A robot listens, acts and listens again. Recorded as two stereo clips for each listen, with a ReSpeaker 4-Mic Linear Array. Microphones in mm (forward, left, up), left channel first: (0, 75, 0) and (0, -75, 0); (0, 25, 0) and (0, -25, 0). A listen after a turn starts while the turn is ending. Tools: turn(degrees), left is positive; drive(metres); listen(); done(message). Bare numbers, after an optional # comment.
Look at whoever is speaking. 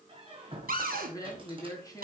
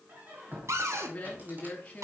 # The woman speaking: about 25° left or 155° left.
turn(25)
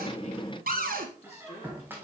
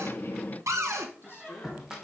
# So it is at 130° left.
turn(130)
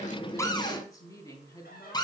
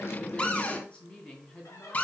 # The woman speaking is now 25° left.
turn(25)
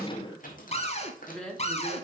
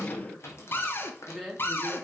done("Found it: a woman speaking, straight ahead.")